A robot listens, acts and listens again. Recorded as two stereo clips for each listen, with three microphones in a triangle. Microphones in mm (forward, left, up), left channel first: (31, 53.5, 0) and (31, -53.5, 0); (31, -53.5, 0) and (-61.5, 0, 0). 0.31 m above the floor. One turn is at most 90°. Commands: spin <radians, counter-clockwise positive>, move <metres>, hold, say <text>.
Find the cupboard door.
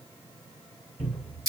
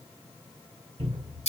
spin 1.57
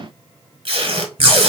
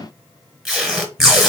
spin 1.22
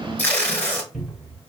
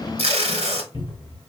say Found it: a cupboard door, straight ahead.